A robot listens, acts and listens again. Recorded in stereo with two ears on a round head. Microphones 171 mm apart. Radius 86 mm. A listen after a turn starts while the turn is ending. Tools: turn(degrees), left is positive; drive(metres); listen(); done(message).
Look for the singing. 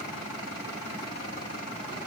listen()
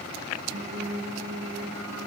turn(degrees=-75)
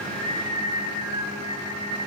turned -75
turn(degrees=-15)
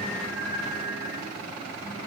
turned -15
done("Facing the singing.")